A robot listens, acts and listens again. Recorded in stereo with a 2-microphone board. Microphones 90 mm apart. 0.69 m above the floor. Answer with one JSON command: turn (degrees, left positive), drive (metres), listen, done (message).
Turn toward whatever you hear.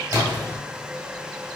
{"turn": -45}
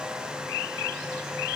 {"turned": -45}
{"listen": true}
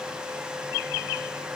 {"done": "I heard a splash, but can't make it out now. It was about straight ahead or 90° right."}